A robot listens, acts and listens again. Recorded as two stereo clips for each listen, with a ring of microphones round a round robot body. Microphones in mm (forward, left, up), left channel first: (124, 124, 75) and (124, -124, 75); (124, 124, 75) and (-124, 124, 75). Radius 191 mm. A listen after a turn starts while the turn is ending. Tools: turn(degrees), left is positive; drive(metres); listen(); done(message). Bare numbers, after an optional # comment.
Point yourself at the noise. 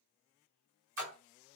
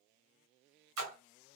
# The splash: 170° right.
turn(-170)
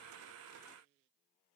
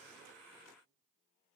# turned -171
done("Facing where the splash came from. I can't hear it now.")